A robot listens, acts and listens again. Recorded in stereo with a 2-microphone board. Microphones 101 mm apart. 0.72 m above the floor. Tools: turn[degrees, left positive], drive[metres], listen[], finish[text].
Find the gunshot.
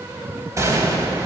Thought: The gunshot: about 30° right or 150° right.
Action: turn[-30]
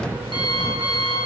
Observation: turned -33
Action: listen[]
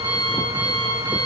Action: finish[I heard a gunshot, but can't make it out now. It was about straight ahead or 115° right.]